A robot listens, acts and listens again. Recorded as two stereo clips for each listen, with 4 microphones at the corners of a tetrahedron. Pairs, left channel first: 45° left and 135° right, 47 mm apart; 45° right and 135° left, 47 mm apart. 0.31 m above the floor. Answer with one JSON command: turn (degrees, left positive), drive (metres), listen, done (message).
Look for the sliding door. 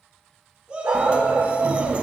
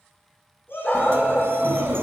{"turn": 165}
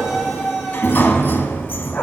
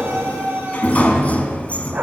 {"turn": 10}
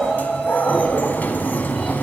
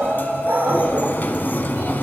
{"done": "Facing the sliding door."}